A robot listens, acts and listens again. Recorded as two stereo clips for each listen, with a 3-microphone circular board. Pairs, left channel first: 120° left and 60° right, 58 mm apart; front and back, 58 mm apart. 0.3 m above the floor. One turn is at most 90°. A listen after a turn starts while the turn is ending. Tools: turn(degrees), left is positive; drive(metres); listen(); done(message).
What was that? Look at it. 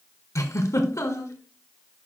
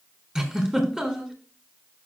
turn(degrees=90)
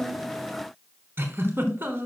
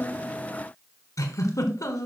turn(degrees=-10)
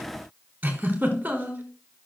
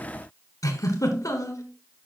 done("Facing the giggle.")